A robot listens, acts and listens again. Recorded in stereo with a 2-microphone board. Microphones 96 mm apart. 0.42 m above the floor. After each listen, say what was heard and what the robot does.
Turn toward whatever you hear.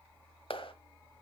The clap: about 70° left or 110° left. Turn 70° left.
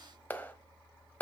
So it is at 20° left. Turn 20° left.
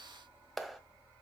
Facing the clap.